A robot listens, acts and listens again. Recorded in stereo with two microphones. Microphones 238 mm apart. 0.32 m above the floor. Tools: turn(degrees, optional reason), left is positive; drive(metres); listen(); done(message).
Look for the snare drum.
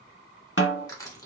turn(degrees=50, reason="The snare drum: about 50° left or 130° left.")
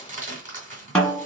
done("Facing the snare drum, 1 to 2 m away.")